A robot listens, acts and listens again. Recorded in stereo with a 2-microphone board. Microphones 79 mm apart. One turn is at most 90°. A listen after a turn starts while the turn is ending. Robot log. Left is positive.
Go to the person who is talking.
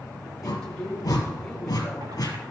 cmd yaw +30
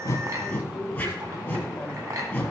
note: So it is at 20° right.
cmd yaw -20
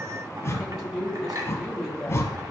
cmd fwd 1.0
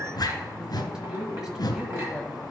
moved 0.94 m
note: The woman speaking is now 10° right.
cmd yaw -10
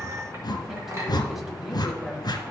cmd idle
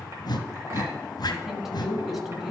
cmd fwd 1.0
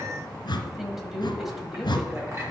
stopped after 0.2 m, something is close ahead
end: I am next to the woman speaking.